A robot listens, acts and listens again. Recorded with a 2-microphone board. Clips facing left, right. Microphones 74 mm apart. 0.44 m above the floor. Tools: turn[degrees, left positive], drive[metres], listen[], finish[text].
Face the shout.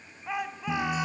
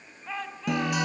Action: turn[30]
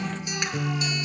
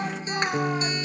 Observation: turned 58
Action: listen[]
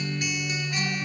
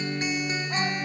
Action: listen[]
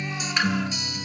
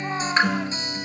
Action: finish[I heard a shout, but can't make it out now. It was about 45° right or 110° left.]